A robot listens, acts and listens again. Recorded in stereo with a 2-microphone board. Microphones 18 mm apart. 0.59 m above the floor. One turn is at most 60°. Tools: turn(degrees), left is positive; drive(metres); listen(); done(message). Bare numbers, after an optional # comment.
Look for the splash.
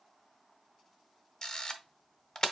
listen()
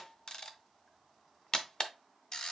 listen()
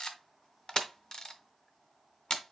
done("I can't make out a splash to turn to.")